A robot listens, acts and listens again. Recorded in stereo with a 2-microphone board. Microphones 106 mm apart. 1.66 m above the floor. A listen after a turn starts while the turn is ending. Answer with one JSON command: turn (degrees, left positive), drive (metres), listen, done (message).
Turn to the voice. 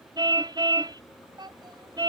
{"turn": -50}
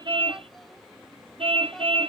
{"listen": true}
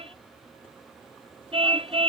{"listen": true}
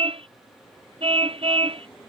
{"done": "I heard a child speaking, but can't make it out now. It was about straight ahead or 80° right."}